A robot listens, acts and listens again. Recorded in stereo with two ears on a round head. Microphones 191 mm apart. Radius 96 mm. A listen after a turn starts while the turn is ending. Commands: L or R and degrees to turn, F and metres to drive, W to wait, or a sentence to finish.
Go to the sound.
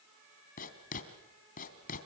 L40
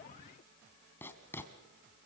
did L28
L10
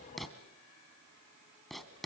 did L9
F1.0
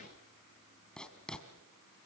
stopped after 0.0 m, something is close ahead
Something is in my way. I am facing the writing but have not reached it.